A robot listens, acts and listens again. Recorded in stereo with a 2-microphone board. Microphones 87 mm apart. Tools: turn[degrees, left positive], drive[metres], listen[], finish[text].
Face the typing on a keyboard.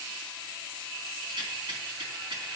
Action: listen[]
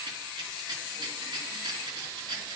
Action: listen[]
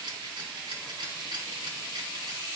Action: finish[I can't make out typing on a keyboard to turn to.]